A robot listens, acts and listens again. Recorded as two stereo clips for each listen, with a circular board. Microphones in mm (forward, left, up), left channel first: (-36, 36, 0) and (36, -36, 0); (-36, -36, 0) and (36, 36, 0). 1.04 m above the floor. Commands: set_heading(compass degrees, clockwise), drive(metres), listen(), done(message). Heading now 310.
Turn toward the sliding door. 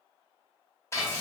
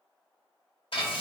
listen()
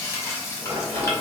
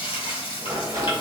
set_heading(325)
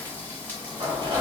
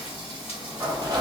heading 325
done("Found it: a sliding door, straight ahead, under 1 m away.")